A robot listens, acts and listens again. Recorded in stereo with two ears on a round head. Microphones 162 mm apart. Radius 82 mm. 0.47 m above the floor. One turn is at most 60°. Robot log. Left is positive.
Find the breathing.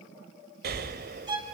note: The breathing: about 60° right or 120° right.
cmd yaw -60
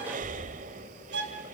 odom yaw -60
note: So it is at 50° right.
cmd yaw -50
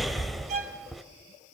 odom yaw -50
end: Found it: breathing, straight ahead.